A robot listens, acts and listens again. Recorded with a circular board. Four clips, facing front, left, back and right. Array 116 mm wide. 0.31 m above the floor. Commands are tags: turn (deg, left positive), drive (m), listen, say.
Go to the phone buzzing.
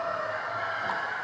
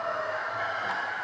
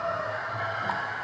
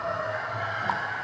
<listen/>
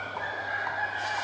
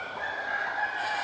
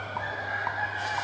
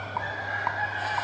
<listen/>
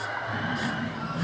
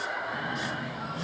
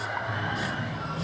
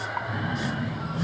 <turn deg="-20"/>
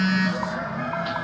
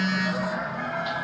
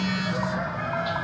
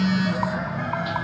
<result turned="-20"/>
<drive m="1.0"/>
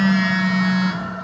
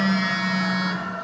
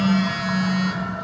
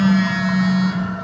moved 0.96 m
<drive m="1.0"/>
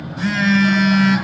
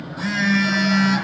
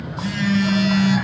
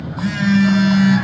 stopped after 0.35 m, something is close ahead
<turn deg="10"/>
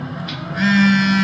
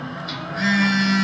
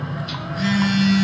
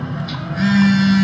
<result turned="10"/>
<say>I am next to the phone buzzing.</say>